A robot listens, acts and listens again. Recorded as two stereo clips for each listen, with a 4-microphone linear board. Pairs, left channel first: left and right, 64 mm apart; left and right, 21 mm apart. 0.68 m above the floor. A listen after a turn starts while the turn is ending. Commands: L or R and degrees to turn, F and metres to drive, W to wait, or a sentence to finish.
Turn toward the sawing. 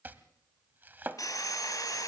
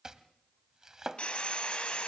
L65
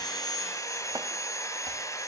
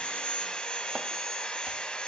L55
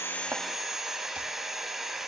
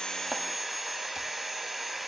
Found it: sawing, straight ahead.